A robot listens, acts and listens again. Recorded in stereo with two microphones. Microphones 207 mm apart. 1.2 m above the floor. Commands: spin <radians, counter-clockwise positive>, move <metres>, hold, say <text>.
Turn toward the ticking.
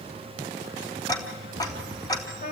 spin 0.35
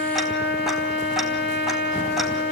hold
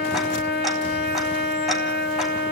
hold
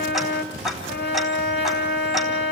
say Facing the ticking, 2 to 4 m away.